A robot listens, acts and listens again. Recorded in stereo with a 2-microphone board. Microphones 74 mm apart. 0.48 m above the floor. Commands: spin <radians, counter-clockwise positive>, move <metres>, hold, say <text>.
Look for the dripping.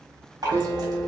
spin -1.13
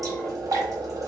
spin -0.87
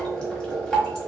spin 0.26
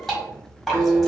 say Found it: dripping, straight ahead, 1 to 2 m away.